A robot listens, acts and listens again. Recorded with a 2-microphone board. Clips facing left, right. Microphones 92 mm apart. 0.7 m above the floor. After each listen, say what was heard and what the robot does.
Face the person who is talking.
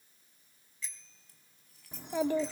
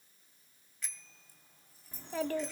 Turn 30° left.
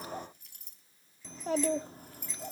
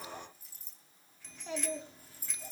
So it is at 135° left. Turn 135° left.
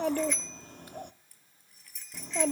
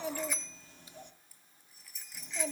The child speaking is now 60° left. Turn 60° left.
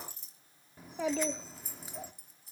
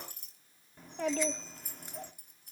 Facing the child speaking.